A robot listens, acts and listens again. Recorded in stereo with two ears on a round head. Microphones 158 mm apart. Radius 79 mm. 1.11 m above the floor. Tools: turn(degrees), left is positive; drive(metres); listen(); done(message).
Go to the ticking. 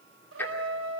turn(degrees=30)
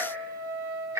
turn(degrees=-20)
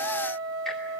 listen()
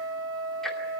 listen()
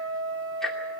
drive(metres=1.0)
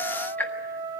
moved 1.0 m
turn(degrees=10)
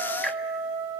listen()
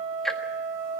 drive(metres=1.0)
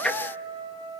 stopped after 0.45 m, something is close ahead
done("Arrived at the ticking, straight ahead.")